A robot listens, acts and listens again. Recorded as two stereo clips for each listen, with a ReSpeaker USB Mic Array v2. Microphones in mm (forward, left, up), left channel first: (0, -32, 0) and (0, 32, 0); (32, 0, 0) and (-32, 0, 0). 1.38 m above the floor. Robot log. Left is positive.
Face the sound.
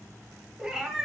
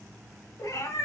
end: Facing the cat meowing, 2 to 4 m away.